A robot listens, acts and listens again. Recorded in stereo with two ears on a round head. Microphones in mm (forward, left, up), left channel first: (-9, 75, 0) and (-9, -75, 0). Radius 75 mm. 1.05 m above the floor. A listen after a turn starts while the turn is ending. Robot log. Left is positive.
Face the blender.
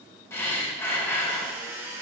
cmd yaw -30
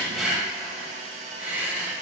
note: So it is at 135° right.
cmd yaw -135
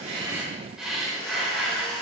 note: The blender is now 30° left.
cmd yaw +30
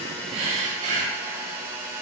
note: The blender is now 15° right.
cmd yaw -15
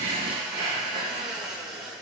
end: Found it: a blender, straight ahead.